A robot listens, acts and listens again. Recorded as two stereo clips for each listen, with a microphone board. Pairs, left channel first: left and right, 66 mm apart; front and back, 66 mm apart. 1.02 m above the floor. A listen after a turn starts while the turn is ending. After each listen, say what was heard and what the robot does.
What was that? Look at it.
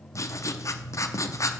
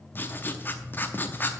The writing: 55° left. Turn 55° left.
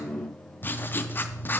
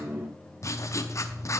The writing is now 30° left. Turn 30° left.
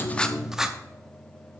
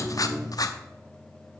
The writing is now 10° right. Turn 10° right.
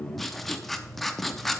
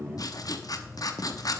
Facing the writing.